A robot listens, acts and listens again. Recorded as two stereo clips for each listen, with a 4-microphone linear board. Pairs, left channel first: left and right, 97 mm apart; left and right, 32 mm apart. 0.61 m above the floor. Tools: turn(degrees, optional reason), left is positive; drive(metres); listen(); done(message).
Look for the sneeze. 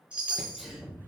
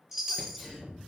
turn(degrees=-30)
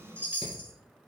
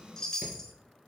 listen()
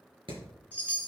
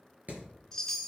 done("I heard a sneeze, but can't make it out now. It was about 25° left or 145° right.")